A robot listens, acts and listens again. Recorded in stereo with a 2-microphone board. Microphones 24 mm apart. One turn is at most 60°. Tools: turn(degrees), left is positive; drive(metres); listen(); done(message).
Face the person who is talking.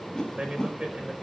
turn(degrees=-35)
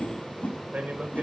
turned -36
turn(degrees=-60)
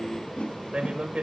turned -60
turn(degrees=-50)
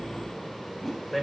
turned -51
done("Facing the man speaking.")